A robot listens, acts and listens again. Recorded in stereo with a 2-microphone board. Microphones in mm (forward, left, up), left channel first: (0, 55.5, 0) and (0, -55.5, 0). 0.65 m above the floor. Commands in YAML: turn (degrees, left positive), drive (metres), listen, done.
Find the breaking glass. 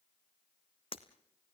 turn: 55
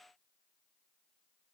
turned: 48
listen: true
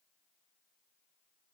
done: "I heard breaking glass, but can't make it out now. It was about 5° left or 80° left."